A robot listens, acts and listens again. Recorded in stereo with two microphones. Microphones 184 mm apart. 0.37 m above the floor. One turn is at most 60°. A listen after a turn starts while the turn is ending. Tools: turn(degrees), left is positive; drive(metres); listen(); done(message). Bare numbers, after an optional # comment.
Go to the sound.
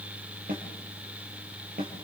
# The snare drum: about 55° right or 125° right.
turn(-55)
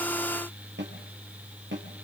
# So it is at 70° right.
turn(-60)
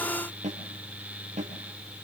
# The snare drum is now 40° right.
turn(-40)
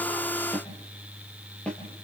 drive(1.0)
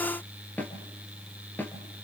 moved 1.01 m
# The snare drum is now 10° left.
turn(10)
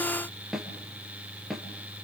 drive(1.0)
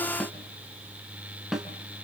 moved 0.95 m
drive(1.0)
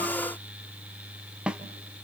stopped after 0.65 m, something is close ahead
done("I am next to the snare drum.")